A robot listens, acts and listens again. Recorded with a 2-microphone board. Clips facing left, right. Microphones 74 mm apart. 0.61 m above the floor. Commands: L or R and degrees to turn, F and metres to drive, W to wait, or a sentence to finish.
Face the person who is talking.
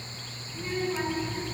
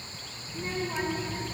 R70
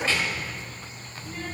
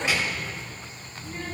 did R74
Found it: a child speaking, straight ahead.